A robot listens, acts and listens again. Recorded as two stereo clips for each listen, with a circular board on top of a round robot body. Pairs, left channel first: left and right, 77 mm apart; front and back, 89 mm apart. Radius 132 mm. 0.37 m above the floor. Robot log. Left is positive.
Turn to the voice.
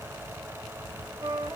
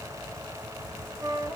cmd idle
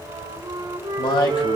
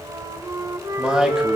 note: The man speaking: 100° left.
cmd yaw +100
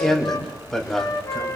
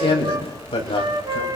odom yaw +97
end: Facing the man speaking, 2 to 4 m away.